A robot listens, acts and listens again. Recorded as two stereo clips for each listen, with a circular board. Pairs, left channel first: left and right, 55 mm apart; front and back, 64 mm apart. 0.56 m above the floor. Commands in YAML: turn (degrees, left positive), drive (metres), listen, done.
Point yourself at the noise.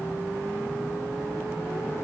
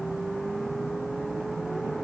listen: true
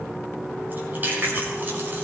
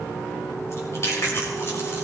turn: -35
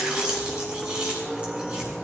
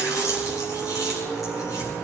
turn: -20
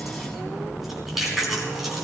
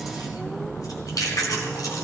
done: "Found it: chewing, straight ahead, over 4 m away."